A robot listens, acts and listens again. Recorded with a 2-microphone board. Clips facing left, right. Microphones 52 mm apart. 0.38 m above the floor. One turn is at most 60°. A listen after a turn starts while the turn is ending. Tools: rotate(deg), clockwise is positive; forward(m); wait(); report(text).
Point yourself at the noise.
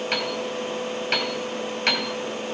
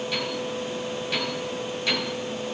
rotate(-60)
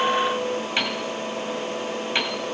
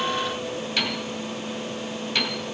rotate(-25)
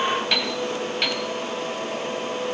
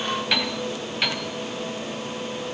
report("Facing the piano, 1 to 2 m away.")